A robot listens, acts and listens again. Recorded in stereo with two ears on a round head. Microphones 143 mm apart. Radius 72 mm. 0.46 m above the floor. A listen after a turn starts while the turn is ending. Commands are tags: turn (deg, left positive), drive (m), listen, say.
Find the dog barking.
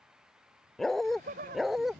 <turn deg="30"/>
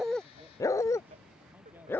<turn deg="165"/>
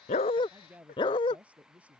<turn deg="35"/>
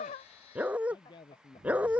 <turn deg="-10"/>
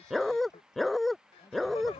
<say>Found it: a dog barking, straight ahead.</say>